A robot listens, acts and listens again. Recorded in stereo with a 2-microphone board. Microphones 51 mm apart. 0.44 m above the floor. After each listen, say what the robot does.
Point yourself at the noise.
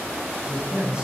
Turn 15° right.
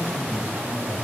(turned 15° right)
Turn 150° right.
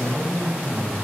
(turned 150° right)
Turn 15° left.
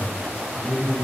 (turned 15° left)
Found it: a man speaking, straight ahead, 2 to 4 m away.